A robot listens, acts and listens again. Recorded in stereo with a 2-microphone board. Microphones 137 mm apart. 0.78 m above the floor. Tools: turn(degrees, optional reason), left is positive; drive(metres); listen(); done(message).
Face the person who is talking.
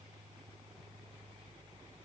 listen()
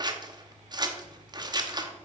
listen()
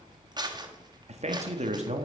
turn(degrees=-55, reason="The man speaking: about 55° right or 125° right.")
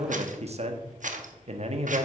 turn(degrees=-60, reason="So it is at 60° right.")
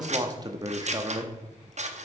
turn(degrees=-30, reason="The man speaking is now 30° right.")
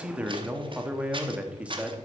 turn(degrees=-10, reason="The man speaking is now 10° right.")
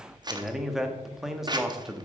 done("Facing the man speaking.")